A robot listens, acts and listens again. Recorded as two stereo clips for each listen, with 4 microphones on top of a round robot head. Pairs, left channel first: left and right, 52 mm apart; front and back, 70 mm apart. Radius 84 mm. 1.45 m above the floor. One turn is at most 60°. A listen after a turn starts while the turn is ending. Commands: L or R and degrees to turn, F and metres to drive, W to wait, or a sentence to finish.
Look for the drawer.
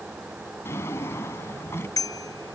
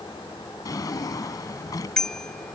L35
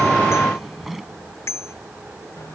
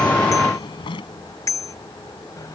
Found it: a drawer, straight ahead.